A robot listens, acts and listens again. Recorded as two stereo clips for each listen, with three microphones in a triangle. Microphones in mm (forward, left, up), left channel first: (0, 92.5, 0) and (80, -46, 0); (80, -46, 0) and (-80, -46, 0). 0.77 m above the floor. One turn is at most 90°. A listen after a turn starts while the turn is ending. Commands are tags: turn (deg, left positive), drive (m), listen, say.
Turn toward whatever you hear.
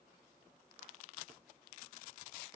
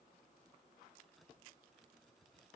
<listen/>
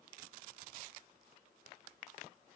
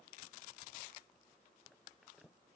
<listen/>
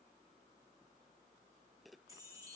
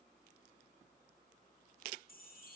<turn deg="10"/>
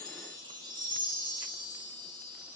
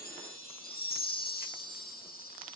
<say>Facing the chime.</say>